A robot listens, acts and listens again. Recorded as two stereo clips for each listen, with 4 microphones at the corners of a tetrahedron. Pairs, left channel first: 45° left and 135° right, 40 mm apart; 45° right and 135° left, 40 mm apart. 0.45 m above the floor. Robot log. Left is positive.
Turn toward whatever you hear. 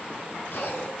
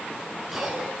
note: The cough: 50° left.
cmd yaw +50
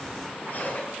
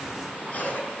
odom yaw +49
end: Found it: a cough, straight ahead, 2 to 4 m away.